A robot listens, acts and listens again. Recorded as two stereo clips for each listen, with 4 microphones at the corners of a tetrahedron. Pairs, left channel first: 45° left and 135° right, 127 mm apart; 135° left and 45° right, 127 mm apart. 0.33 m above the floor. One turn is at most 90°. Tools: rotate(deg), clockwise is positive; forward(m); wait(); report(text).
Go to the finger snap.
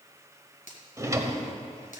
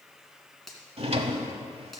rotate(-45)
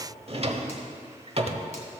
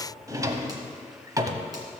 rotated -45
wait()
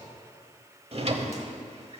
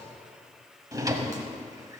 wait()
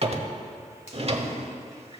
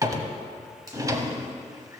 rotate(-15)
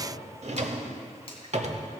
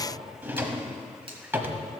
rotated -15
wait()
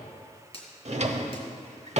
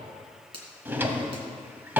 forward(1.0)
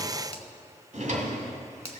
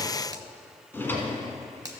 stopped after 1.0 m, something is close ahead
rotate(-10)
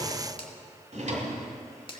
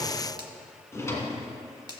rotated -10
report("Arrived at the finger snap, straight ahead.")